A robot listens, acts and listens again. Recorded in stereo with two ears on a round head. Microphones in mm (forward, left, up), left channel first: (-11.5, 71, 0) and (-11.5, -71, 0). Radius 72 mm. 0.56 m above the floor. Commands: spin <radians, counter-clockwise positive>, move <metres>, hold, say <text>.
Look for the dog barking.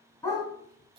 spin 0.35
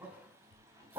spin -0.35
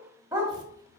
spin -0.35
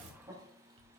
hold
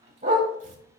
spin -0.70
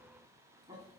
hold
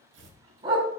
spin -0.52
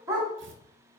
spin -0.35
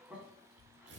hold
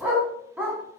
say Found it: a dog barking, straight ahead.